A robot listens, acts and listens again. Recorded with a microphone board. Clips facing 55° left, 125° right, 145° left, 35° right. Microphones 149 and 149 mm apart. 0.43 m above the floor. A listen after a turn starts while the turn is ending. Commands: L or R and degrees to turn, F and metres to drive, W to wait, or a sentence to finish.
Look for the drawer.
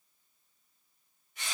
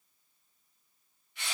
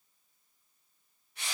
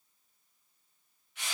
W
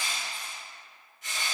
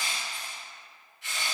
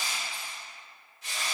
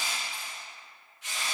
W
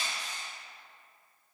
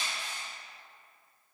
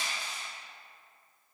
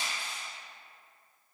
I can't make out a drawer, only crushing.